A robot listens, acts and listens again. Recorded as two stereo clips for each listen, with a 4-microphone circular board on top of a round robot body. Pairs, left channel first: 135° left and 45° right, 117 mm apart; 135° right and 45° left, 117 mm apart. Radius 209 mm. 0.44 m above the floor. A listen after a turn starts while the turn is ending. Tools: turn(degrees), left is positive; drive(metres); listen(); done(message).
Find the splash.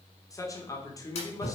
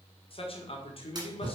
turn(degrees=100)
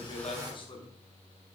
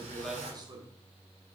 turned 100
done("Facing where the splash came from. I can't hear it now.")